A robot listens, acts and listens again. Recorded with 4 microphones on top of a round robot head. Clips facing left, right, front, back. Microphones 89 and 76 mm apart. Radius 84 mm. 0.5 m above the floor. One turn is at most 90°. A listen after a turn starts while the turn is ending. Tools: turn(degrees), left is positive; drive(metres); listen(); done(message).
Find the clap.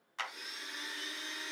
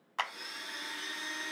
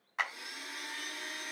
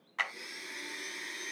turn(degrees=-75)
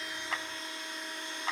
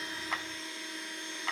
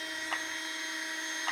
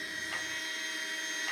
listen()
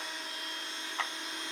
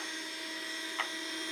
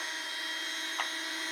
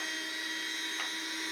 listen()
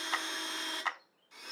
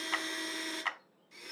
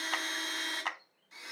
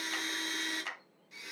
turn(degrees=25)
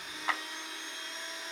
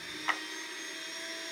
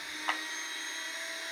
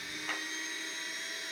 turn(degrees=15)
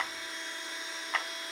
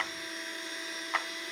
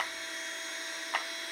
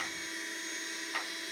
done("Facing the clap, under 1 m away.")